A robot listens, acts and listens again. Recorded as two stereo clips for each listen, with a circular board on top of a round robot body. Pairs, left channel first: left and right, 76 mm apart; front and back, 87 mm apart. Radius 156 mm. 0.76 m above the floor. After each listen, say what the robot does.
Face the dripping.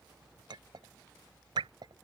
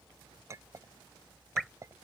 Turn 90° right.
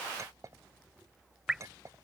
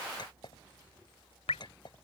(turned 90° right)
Facing the dripping.